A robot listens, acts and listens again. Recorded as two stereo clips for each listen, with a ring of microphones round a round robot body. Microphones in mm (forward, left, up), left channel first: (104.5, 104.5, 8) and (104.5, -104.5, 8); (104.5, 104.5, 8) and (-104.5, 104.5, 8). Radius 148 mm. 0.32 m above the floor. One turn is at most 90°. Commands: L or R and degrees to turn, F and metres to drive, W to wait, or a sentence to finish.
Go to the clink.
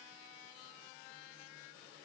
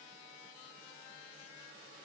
W
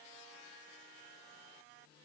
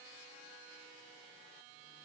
W
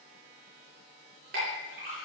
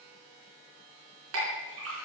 R90
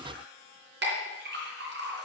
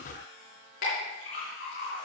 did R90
R60
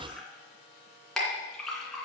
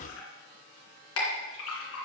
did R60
F1.0
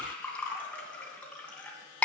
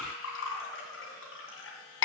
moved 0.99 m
F1.0
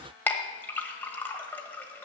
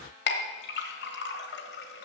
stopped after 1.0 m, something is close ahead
L10
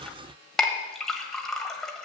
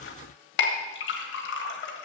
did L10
Arrived at the clink, straight ahead.